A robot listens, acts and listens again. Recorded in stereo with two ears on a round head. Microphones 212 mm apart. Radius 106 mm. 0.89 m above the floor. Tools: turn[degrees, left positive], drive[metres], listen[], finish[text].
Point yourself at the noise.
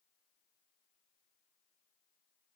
Action: listen[]
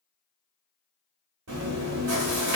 Action: turn[-90]
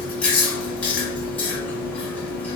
Action: finish[Found it: chewing, straight ahead, 1 to 2 m away.]